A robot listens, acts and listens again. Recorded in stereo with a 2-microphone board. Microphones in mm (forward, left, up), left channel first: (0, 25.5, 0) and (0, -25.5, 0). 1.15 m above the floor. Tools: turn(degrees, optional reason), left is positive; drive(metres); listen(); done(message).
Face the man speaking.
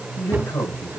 turn(degrees=90)
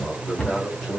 done("Found it: a man speaking, straight ahead, over 4 m away.")